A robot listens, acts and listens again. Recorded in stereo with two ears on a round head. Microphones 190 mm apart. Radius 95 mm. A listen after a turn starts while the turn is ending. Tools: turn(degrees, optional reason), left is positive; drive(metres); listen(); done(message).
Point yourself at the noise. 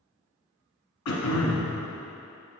turn(degrees=90)
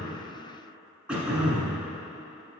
done("Found it: throat clearing, straight ahead.")